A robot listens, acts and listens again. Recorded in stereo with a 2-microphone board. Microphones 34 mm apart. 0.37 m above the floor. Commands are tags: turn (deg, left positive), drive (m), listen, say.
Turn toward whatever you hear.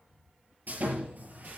<turn deg="-60"/>
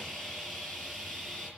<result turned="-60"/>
<say>Facing the sawing.</say>